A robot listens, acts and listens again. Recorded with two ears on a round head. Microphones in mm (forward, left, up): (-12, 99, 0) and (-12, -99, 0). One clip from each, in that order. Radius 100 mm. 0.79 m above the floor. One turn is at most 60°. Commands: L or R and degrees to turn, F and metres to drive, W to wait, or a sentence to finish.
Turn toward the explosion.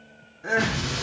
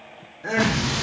R30
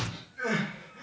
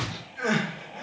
L25
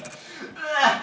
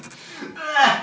I heard an explosion from this way, but can't make it out now.